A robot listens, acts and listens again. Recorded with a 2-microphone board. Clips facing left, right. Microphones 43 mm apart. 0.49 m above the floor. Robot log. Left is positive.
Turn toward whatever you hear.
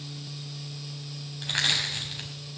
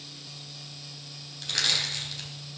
note: The crushing: about 25° left or 155° left.
cmd yaw +25
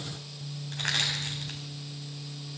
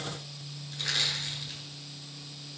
note: So it is at 130° left.
cmd yaw +130
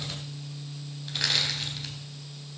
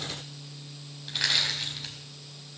end: Found it: crushing, straight ahead, 2 to 4 m away.